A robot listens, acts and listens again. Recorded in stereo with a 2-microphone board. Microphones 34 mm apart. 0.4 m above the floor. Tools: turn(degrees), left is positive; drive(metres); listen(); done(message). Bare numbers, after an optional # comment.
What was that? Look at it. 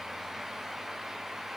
listen()
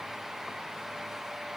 listen()
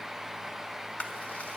# The chewing: about 35° left or 145° left.
turn(35)
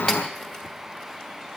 listen()
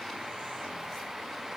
listen()
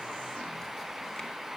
done("I heard chewing, but can't make it out now. It was about straight ahead or 110° left.")